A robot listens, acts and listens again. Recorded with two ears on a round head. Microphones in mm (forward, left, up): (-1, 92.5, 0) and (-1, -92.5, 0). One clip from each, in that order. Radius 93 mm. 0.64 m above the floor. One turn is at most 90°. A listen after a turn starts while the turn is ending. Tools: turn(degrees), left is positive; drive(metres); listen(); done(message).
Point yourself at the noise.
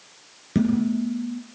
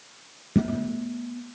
turn(degrees=30)
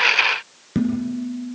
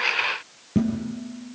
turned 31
turn(degrees=90)
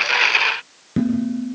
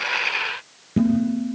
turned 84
turn(degrees=35)
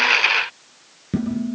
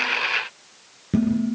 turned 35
done("Found it: dishes clattering, straight ahead, over 4 m away.")